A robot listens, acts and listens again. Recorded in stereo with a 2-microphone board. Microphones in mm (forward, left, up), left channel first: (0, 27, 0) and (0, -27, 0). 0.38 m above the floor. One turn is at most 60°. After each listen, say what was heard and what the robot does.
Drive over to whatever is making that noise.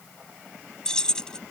Turn 30° left.
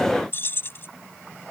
So it is at 135° left. Turn 60° left.
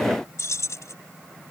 The keys jangling is now 85° left. Turn 60° left.
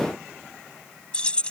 The keys jangling is now 20° left. Turn 20° left.
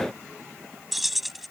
Drive 1.0 m forward.
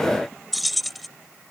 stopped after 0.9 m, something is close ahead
Arrived at the keys jangling, straight ahead.